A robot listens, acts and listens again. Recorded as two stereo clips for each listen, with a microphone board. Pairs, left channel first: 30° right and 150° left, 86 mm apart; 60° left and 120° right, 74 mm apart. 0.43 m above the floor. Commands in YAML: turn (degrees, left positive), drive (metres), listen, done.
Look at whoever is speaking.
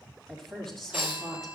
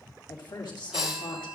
turn: 55
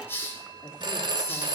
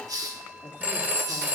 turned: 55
listen: true
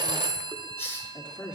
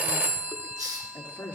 done: "Found it: a woman speaking, straight ahead."